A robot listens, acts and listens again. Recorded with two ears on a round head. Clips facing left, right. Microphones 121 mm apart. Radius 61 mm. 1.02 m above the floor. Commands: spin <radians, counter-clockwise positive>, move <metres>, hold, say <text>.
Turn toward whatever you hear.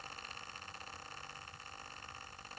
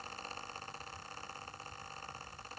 hold
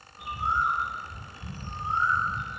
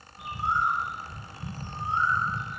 spin -1.13
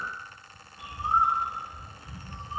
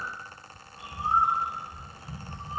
spin -0.44
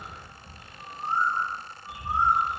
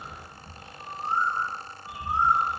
spin -0.17
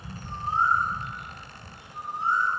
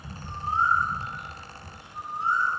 say Facing the bird.